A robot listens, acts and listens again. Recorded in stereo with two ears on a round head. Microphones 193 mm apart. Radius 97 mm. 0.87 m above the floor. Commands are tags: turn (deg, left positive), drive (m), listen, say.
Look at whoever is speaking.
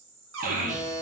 <turn deg="-40"/>
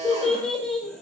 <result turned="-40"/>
<say>Facing the child speaking, under 1 m away.</say>